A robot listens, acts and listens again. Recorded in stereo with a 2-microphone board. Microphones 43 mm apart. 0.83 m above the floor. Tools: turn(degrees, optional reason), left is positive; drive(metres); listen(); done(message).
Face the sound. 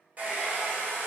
turn(degrees=-35, reason="The hair dryer: about 35° right or 145° right.")
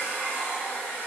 turn(degrees=-105, reason="So it is at 105° right.")
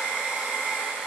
turn(degrees=-30, reason="The hair dryer is now 30° right.")
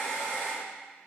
turn(degrees=10, reason="The hair dryer is now 10° left.")
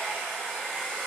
done("Found it: a hair dryer, straight ahead, 1 to 2 m away.")